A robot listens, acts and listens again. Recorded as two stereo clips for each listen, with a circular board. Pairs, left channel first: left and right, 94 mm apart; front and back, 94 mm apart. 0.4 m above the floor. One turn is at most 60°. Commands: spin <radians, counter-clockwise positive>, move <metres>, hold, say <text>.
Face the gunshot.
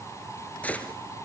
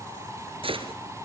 spin 1.05
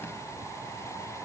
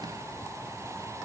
spin 1.05
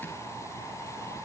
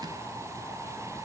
spin 0.79
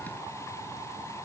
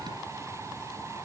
say I heard a gunshot from this way, but can't make it out now.